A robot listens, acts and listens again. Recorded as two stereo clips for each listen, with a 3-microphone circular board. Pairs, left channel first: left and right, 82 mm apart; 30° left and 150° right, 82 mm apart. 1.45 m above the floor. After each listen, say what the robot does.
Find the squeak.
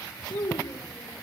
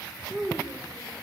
Keep listening.
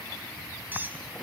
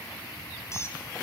Turn 25° right.
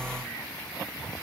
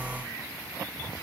Keep listening.
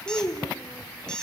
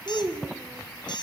Turn 10° left.
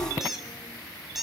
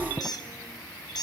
Found it: a squeak, straight ahead.